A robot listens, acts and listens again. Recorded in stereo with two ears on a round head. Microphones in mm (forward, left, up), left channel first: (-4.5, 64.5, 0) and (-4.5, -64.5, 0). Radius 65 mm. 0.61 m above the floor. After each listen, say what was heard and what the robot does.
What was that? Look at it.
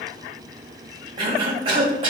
The cough: about 40° right or 140° right. Turn 40° right.
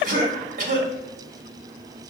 So it is at 95° right. Turn 95° right.
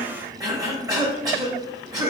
The cough is now 30° right. Turn 30° right.
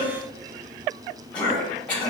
The cough is now 10° left. Turn 10° left.
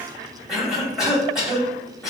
Facing the cough, 1 to 2 m away.